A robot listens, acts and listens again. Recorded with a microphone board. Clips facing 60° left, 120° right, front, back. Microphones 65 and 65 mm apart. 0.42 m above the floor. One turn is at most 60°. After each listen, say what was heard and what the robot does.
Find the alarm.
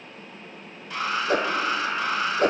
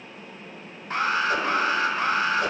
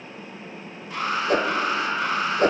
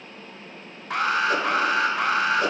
The alarm: 170° right. Turn 60° right.
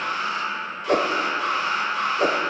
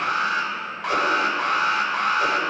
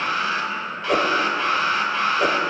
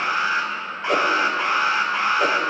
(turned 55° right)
The alarm is now 115° right. Turn 60° right.
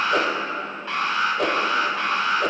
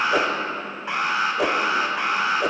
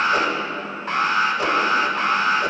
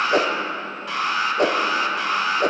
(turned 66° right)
The alarm is now 50° right. Turn 50° right.
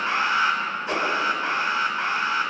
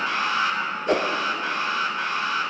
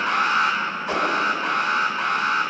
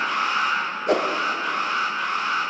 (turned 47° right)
Found it: an alarm, straight ahead, 1 to 2 m away.